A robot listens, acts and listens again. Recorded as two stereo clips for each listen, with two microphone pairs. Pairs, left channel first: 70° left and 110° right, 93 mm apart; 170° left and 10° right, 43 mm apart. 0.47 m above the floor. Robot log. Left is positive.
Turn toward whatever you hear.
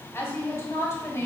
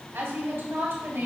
note: The woman speaking: 15° left.
cmd yaw +15
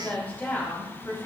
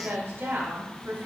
end: Facing the woman speaking.